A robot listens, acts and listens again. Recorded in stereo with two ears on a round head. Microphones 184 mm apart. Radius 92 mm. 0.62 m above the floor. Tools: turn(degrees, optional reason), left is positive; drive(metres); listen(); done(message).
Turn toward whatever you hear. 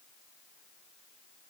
listen()
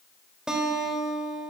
turn(degrees=-30)
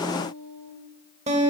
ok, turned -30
turn(degrees=-145, reason="So it is at 145° right.")
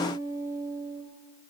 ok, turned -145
turn(degrees=-15, reason="The guitar is now 15° right.")
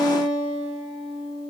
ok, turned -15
done("Found it: a guitar, straight ahead.")